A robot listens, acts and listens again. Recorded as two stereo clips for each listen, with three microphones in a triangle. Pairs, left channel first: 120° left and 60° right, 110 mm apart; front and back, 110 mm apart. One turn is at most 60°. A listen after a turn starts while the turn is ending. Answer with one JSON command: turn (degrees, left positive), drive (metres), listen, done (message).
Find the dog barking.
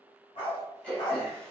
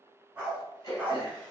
{"turn": 60}
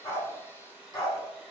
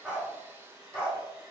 {"turn": 60}
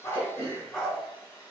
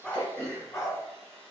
{"turn": 40}
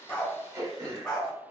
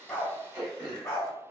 {"turn": 45}
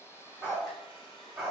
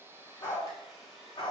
{"turn": 20}
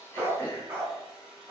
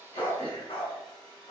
{"done": "Facing the dog barking, 1 to 2 m away."}